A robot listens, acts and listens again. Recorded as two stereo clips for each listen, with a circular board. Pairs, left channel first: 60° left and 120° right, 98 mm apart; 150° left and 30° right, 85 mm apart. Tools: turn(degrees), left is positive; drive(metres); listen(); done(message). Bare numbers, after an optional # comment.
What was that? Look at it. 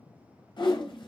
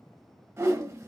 # The whoosh: 25° left.
turn(25)
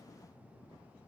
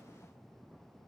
listen()
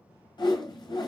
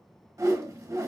# The whoosh is now 20° left.
turn(20)
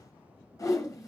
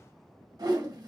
done("Facing the whoosh.")